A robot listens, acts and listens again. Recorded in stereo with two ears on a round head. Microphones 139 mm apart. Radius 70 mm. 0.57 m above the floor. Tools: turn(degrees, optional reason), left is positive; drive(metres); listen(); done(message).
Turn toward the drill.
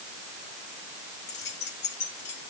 listen()
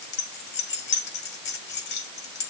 listen()
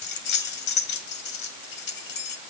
done("I can't make out a drill to turn to.")